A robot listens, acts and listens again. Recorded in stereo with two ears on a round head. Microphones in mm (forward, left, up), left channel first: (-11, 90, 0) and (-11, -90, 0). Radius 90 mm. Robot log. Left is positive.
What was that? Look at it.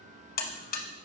note: The buzzer: about 50° left or 130° left.
cmd yaw +50
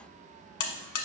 note: So it is at 80° left.
cmd yaw +80
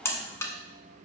note: The buzzer is now 15° left.
cmd yaw +15
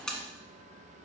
end: Facing the buzzer, 1 to 2 m away.